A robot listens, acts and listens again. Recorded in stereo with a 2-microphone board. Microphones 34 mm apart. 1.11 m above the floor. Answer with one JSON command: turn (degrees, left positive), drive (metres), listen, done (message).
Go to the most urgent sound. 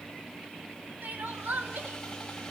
{"turn": -60}
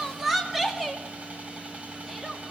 {"drive": 1.0}
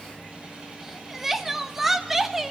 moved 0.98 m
{"drive": 1.0}
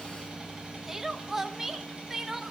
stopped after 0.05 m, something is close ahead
{"turn": -10}
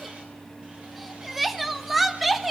{"done": "Arrived at the crying, straight ahead."}